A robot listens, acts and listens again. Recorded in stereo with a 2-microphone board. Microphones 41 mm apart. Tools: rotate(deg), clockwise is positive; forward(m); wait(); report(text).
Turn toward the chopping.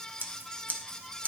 wait()
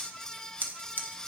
wait()
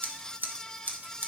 report("I can't make out chopping, only scissors.")